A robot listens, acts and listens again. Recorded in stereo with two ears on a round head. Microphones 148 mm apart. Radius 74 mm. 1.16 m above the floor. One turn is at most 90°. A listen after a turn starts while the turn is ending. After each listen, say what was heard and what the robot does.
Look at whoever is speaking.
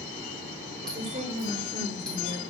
The woman speaking: about 40° right or 140° right. Turn 40° right.
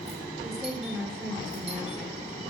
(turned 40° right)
Facing the woman speaking, over 4 m away.